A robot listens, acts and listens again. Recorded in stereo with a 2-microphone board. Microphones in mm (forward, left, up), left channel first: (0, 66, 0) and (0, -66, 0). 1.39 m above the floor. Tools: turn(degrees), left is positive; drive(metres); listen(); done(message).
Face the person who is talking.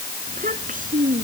turn(degrees=-75)
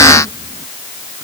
listen()
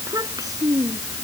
turn(degrees=-25)
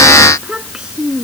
done("Found it: a child speaking, straight ahead.")